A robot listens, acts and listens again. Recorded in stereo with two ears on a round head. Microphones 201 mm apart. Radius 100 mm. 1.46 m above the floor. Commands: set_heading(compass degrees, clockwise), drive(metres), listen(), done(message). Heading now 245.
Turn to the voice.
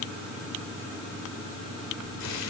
listen()
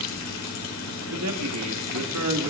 set_heading(335)
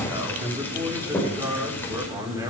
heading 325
set_heading(340)
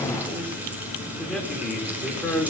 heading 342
done("Facing the man speaking, over 4 m away.")